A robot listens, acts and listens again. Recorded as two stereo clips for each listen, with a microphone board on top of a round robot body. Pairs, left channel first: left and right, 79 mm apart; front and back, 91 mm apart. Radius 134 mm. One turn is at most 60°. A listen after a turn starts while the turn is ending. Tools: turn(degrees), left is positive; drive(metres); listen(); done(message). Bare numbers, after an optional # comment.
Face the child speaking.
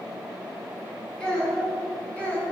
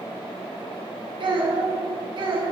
# The child speaking: 155° left.
turn(60)
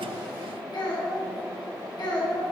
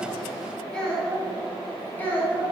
# The child speaking is now 70° left.
turn(60)
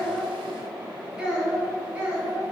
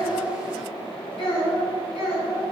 # The child speaking is now 15° right.
turn(-15)
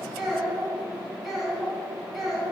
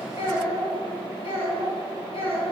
done("Found it: a child speaking, straight ahead, 2 to 4 m away.")